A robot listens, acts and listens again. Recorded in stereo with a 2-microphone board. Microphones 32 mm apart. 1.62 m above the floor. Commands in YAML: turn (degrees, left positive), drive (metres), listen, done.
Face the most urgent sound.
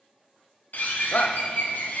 turn: 60
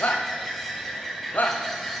turn: 60
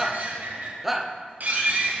done: "Facing the shout."